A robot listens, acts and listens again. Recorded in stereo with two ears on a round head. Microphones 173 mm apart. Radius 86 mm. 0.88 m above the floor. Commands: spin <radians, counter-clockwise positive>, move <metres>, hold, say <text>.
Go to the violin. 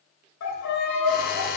spin 1.57
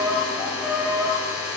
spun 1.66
move 1.0
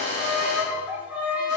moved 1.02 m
spin -0.17
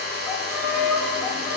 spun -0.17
move 1.0
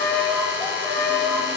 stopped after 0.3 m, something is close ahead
say I am next to the violin.